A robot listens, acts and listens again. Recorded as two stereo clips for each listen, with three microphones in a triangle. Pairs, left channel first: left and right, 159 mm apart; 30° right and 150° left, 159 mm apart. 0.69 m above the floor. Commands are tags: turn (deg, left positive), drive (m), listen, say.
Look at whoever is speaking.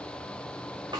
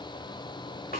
<listen/>
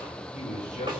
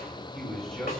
<turn deg="55"/>
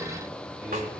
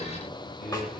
<turn deg="-10"/>
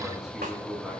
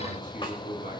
<say>Facing the man speaking.</say>